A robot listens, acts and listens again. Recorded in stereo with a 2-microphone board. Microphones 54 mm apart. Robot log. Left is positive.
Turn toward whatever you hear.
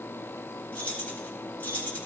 note: The keys jangling: about 30° left or 150° left.
cmd yaw +30
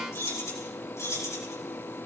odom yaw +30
note: So it is at 110° left.
cmd yaw +110
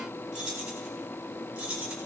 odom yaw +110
note: The keys jangling is now 20° right.
cmd yaw -20
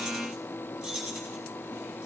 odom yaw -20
end: Facing the keys jangling, over 4 m away.